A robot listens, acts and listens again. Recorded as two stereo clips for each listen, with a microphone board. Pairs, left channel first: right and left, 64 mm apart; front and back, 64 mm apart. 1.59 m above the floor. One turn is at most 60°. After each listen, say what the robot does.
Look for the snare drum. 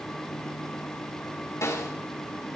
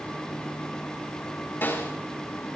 Turn 55° right.
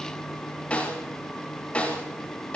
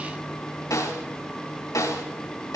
Turn 20° right.
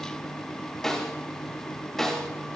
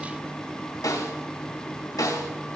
Found it: a snare drum, straight ahead, over 4 m away.